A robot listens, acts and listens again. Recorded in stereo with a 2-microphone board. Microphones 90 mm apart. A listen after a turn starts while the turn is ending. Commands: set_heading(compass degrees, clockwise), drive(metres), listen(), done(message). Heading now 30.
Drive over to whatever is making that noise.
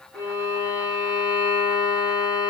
set_heading(350)
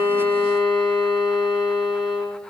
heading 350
drive(1.0)
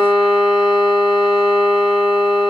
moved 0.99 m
drive(1.0)
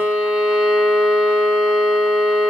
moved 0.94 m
set_heading(0)
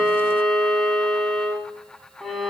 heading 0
drive(1.0)
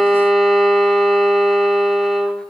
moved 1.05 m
drive(1.0)
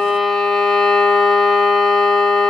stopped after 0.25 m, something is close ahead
done("I am next to the violin.")